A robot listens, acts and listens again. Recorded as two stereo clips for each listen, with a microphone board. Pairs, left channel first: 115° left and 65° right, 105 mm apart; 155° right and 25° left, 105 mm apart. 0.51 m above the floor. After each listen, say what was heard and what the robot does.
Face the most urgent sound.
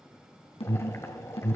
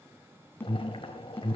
The alarm: 135° left. Turn 135° left.
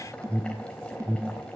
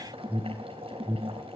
The alarm is now 10° right. Turn 10° right.
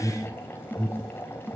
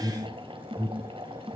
Facing the alarm, 2 to 4 m away.